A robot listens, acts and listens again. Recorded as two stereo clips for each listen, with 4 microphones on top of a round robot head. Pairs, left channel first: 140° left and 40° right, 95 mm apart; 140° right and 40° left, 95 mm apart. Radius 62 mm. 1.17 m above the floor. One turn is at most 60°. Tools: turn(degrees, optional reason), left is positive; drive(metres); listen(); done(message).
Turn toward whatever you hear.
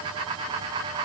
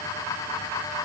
listen()
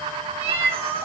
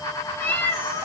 turn(degrees=-60, reason="The cat meowing: 80° right.")
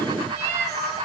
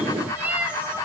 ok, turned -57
turn(degrees=-35, reason="The cat meowing is now 35° right.")
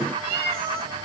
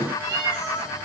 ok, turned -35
turn(degrees=-10, reason="The cat meowing is now 10° right.")
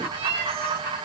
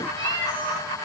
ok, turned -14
done("Facing the cat meowing, 2 to 4 m away.")